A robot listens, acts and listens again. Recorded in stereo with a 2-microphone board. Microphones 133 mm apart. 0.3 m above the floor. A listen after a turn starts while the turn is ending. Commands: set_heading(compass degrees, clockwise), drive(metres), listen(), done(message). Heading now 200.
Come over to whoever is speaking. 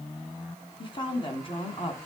set_heading(160)
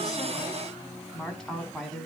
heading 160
drive(1.0)
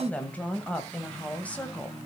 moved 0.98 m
set_heading(145)
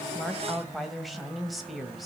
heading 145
drive(1.0)
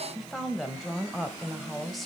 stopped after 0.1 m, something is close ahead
done("Arrived at the woman speaking, straight ahead.")